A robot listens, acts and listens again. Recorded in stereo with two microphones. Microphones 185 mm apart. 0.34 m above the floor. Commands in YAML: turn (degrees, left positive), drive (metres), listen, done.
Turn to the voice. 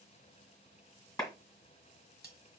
listen: true
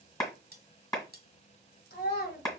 turn: 60
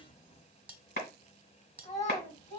turn: 45
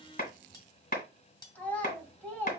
turn: 10
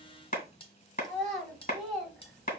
done: "Found it: a child speaking, straight ahead."